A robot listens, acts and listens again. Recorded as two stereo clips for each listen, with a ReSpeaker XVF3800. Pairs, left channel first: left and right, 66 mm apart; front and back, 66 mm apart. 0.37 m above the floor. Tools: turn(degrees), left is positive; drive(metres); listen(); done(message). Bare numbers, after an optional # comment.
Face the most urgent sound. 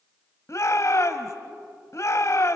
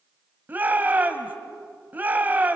# The shout: 120° left.
turn(120)
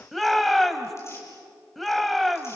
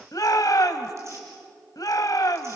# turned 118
done("Facing the shout.")